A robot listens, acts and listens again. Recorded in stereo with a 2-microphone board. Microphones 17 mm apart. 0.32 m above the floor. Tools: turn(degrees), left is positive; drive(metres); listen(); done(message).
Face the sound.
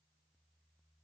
listen()
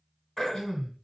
turn(degrees=35)
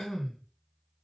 turn(degrees=105)
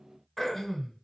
turn(degrees=25)
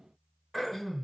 turn(degrees=10)
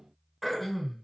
done("Found it: throat clearing, straight ahead.")